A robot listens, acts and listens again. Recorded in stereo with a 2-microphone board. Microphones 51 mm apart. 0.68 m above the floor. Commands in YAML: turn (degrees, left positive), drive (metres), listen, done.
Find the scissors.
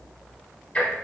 listen: true
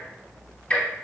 listen: true
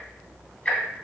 done: "I can't make out scissors to turn to."